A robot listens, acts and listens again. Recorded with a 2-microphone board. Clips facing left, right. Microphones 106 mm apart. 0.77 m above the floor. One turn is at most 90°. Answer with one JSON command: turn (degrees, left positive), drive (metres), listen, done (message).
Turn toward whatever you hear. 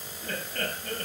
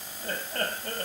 {"turn": -40}
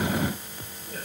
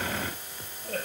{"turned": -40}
{"turn": -90}
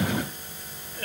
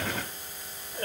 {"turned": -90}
{"turn": -30}
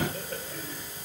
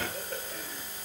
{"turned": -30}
{"done": "Facing the laughter."}